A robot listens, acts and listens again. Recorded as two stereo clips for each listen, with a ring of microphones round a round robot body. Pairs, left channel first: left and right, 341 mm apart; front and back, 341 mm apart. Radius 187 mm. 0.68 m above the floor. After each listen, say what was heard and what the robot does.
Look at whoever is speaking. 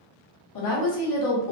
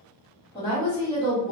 The woman speaking: 75° left. Turn 75° left.
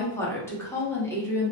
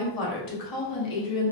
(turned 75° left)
The woman speaking is now 10° left. Turn 10° left.
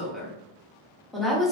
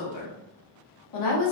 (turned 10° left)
Facing the woman speaking, 1 to 2 m away.